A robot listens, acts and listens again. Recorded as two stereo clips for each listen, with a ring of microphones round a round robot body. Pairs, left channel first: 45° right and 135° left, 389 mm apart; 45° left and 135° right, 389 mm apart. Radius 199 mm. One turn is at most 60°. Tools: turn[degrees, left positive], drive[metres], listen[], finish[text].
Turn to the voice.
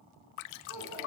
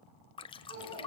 Thought: The child speaking: 140° right.
Action: turn[-60]
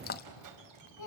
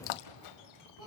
Thought: The child speaking is now 90° right.
Action: turn[-60]
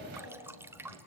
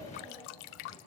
Thought: Nothing new. It was at 30° right.
Action: turn[-30]
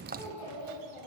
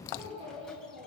Thought: The child speaking is now 60° right.
Action: turn[-60]
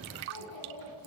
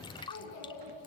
Action: finish[Facing the child speaking.]